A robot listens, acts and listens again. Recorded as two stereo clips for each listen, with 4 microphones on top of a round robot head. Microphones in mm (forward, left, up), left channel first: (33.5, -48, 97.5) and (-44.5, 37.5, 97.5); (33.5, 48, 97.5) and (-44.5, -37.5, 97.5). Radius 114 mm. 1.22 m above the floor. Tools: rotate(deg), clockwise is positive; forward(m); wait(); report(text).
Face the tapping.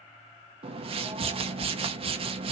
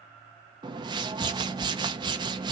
wait()
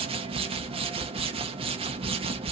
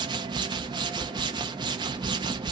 wait()
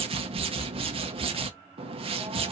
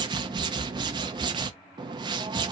report("I can't make out tapping to turn to.")